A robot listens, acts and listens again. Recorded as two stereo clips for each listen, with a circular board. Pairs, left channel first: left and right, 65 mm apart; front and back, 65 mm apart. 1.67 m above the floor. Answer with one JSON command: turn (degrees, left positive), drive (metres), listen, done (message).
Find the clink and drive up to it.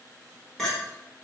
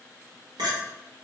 {"turn": 175}
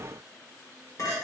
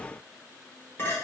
{"turn": 60}
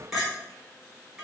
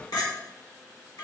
{"drive": 1.0}
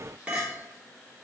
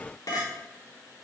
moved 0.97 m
{"turn": -15}
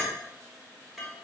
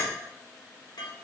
{"drive": 1.0}
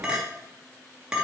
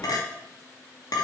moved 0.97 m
{"turn": -10}
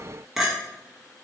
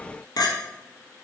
{"drive": 1.0}
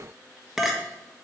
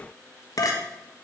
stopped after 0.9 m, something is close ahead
{"done": "Arrived at the clink, straight ahead."}